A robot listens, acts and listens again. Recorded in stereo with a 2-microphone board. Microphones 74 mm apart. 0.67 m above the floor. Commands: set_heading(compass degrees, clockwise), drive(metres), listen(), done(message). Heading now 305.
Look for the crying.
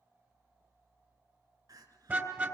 set_heading(5)
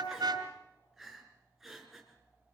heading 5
done("Found it: crying, straight ahead, 2 to 4 m away.")